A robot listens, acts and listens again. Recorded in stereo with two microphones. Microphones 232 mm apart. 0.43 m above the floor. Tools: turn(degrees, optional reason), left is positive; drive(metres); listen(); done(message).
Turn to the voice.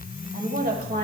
turn(degrees=-45, reason="The woman speaking: about 45° right or 135° right.")
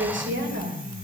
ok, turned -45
turn(degrees=-50, reason="The woman speaking: about 50° right or 130° right.")
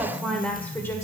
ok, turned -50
turn(degrees=10, reason="So it is at 10° left.")
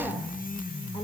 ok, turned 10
listen()
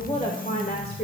turn(degrees=45, reason="The woman speaking is now 45° left.")
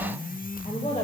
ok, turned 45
turn(degrees=30, reason="The woman speaking is now 30° left.")
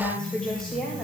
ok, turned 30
done("Found it: a woman speaking, straight ahead.")